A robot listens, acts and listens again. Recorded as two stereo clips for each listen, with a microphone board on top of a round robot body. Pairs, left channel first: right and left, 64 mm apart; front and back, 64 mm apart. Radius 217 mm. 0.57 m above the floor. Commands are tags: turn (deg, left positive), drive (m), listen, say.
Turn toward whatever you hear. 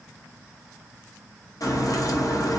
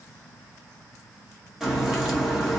<turn deg="-100"/>
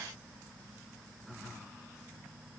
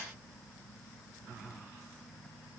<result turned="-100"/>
<say>I heard a crack from this way, but can't make it out now.</say>